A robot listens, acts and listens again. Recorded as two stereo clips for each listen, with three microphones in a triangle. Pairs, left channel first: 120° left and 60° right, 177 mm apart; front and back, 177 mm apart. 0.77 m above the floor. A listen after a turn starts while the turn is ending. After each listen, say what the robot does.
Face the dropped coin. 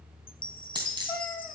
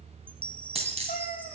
Turn 125° right.
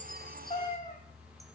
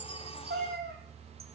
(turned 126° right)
I heard a dropped coin from this way, but can't make it out now.